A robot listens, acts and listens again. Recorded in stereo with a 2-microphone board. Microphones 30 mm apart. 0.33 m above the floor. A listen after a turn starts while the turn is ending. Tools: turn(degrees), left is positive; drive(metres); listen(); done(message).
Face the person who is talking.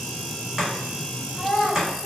turn(degrees=35)
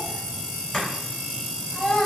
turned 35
turn(degrees=105)
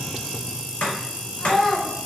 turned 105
done("Facing the child speaking.")